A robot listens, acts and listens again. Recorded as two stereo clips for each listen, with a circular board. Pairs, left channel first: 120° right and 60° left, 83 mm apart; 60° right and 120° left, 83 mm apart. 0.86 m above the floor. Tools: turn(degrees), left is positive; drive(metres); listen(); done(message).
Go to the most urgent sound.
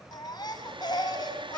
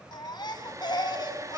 turn(degrees=-90)
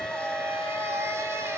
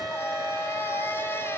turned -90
listen()
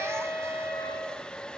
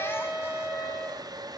listen()
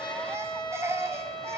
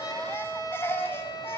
drive(metres=1.0)
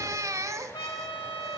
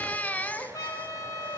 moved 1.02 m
turn(degrees=10)
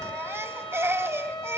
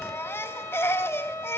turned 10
drive(metres=1.0)
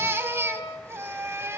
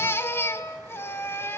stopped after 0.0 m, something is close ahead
done("Arrived at the baby crying, straight ahead.")